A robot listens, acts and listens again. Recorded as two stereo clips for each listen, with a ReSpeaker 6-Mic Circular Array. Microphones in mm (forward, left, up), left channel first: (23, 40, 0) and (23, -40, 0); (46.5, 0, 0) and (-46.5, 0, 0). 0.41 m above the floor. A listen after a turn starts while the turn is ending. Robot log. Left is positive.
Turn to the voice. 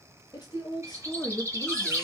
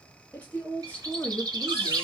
note: The woman speaking: 70° left.
cmd yaw +70
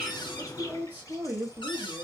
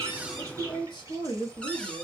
note: The woman speaking is now 25° right.
cmd yaw -25
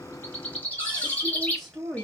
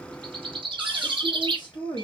end: Found it: a woman speaking, straight ahead, 1 to 2 m away.